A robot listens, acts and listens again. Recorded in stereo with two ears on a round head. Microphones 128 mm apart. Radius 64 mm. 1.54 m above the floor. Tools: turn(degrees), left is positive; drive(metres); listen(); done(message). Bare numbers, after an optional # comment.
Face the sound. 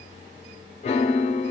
# The piano: about 45° left or 135° left.
turn(45)
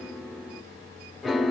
done("Found it: a piano, straight ahead.")